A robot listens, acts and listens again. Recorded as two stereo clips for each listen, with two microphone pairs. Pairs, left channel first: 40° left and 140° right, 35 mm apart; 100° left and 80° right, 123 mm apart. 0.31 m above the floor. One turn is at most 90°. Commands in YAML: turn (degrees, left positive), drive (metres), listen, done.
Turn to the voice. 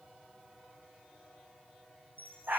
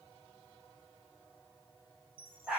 listen: true
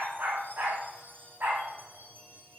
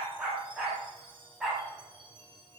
listen: true
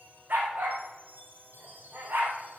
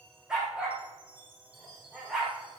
done: "I can't make out anyone speaking, only a chime and a dog barking."